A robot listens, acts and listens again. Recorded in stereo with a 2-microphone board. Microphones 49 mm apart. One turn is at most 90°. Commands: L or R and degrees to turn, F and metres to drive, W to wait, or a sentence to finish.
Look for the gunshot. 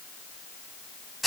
W
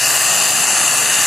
W
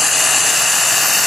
I can't make out a gunshot to turn to.